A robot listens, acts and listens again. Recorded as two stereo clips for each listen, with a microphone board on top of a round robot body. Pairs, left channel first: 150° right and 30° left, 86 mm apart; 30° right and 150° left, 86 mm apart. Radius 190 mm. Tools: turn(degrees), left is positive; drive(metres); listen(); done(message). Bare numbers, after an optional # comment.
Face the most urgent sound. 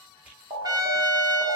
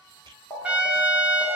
# The alarm: 20° left.
turn(20)
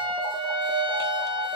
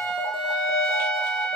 done("Found it: an alarm, straight ahead, 1 to 2 m away.")